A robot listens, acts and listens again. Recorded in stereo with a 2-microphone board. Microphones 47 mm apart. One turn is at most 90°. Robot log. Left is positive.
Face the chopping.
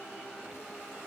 cmd idle
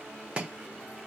note: The chopping: about 25° right or 155° right.
cmd yaw -25
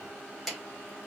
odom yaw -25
end: Facing the chopping.